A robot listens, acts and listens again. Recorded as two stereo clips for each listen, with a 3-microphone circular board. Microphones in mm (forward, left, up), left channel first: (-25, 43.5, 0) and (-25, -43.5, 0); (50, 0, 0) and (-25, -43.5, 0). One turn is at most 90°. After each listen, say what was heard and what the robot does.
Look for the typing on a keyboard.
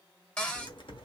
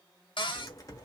The typing on a keyboard: 80° left. Turn 80° left.
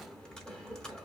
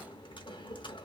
The typing on a keyboard is now 10° left. Turn 10° left.
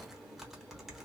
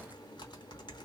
Facing the typing on a keyboard.